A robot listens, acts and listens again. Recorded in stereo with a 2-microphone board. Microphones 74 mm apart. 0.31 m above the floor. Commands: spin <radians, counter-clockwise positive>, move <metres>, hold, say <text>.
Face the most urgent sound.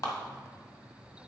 hold
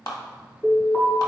spin 0.44
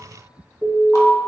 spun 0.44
say Found it: an alarm, straight ahead.